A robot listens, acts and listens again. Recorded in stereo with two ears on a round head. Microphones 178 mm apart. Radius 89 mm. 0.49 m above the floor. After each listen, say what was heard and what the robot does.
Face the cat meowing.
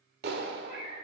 The cat meowing: about 25° right or 155° right. Turn 25° right.
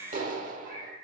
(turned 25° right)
So it is at 135° right. Turn 135° right.
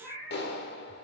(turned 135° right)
Found it: a cat meowing, straight ahead.